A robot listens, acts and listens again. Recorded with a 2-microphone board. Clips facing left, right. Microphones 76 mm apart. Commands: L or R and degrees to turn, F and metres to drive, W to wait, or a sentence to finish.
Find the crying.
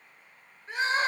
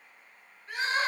L25
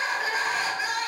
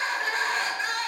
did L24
Facing the crying.